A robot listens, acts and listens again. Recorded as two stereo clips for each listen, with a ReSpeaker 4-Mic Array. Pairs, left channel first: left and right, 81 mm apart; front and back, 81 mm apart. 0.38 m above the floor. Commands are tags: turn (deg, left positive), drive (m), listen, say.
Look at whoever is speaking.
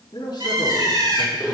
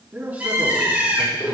<turn deg="115"/>
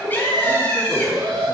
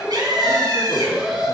<listen/>
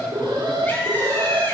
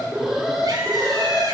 <listen/>
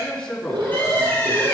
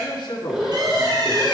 <turn deg="20"/>
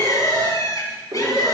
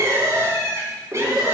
<listen/>
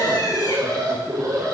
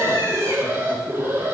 <listen/>
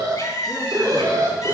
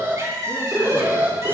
<say>Facing where the man speaking came from. I can't hear it now.</say>